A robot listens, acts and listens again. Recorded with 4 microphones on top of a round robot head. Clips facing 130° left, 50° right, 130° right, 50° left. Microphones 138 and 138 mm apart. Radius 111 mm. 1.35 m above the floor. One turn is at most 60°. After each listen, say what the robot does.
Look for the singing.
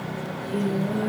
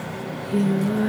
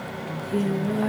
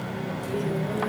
Turn 60° right.
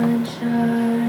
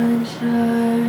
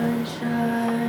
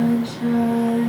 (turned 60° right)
Facing the singing, over 4 m away.